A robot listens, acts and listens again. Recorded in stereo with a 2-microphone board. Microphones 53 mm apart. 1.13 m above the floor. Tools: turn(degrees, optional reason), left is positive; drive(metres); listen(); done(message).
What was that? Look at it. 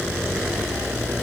listen()
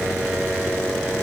listen()
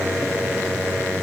done("I can't make out anything to turn to.")